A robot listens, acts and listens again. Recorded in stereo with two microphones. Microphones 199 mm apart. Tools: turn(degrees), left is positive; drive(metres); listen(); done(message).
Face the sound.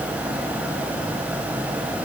listen()
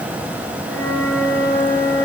turn(degrees=20)
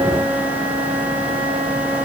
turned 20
done("Facing the flute.")